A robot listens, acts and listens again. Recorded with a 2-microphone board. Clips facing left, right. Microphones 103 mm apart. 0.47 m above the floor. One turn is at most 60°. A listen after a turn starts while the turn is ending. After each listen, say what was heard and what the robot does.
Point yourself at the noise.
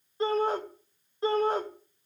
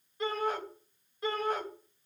The shout: about 30° left or 150° left. Turn 30° left.
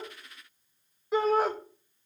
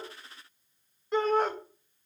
Facing the shout, 2 to 4 m away.